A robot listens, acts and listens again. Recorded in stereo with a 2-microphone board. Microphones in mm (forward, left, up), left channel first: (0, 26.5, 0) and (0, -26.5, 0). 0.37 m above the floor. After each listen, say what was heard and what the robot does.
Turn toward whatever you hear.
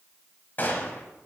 The gunshot: about 35° left or 145° left. Turn 35° left.
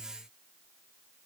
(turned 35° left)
Keep listening.
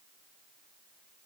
I heard a gunshot, but can't make it out now. It was about straight ahead or 110° left.